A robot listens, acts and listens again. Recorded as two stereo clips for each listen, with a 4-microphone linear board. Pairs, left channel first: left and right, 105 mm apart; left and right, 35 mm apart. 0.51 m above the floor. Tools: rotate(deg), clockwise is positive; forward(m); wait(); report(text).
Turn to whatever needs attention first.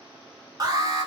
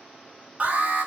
rotate(35)
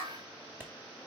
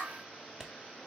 wait()
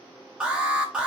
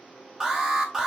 rotate(10)
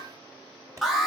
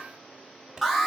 report("Found it: an alarm, straight ahead, 2 to 4 m away.")